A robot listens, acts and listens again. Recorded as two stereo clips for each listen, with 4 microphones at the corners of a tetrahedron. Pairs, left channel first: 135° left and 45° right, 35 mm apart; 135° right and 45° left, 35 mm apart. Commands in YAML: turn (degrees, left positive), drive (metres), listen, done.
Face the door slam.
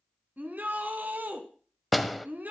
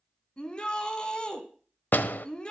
turn: -135
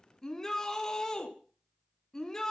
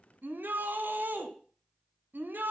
done: "Facing where the door slam came from. I can't hear it now."